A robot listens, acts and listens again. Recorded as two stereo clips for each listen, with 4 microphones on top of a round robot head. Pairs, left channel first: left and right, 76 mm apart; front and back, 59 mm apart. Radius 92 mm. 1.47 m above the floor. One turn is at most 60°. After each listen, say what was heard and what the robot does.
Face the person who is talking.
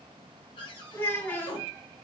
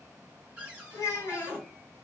The child speaking: 30° left. Turn 30° left.
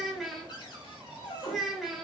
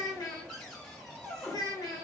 Found it: a child speaking, straight ahead.